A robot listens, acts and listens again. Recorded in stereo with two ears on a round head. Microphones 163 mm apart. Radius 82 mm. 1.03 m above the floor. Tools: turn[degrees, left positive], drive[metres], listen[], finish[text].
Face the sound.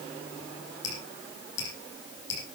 Thought: The dripping: about 70° left or 110° left.
Action: turn[70]
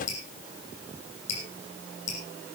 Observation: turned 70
Thought: So it is at 40° left.
Action: turn[40]
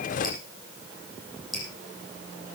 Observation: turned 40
Action: finish[Facing the dripping.]